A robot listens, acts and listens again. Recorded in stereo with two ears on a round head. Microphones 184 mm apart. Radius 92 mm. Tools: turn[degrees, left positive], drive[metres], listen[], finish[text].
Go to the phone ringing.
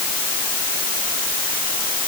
Action: listen[]
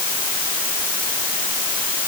Action: listen[]
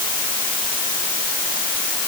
Action: finish[I can't make out a phone ringing.]